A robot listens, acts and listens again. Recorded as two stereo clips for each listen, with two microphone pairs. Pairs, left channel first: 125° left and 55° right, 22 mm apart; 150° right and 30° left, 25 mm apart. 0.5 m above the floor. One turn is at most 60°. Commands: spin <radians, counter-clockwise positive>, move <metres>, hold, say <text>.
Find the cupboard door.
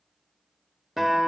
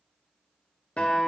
hold
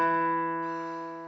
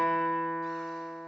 hold
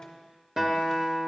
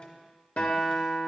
say I can't make out a cupboard door, only a guitar.